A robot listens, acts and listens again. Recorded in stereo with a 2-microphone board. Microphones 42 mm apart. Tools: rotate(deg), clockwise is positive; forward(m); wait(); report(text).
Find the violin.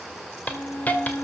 rotate(-70)
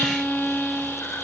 rotate(-30)
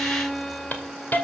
report("Facing the violin, 1 to 2 m away.")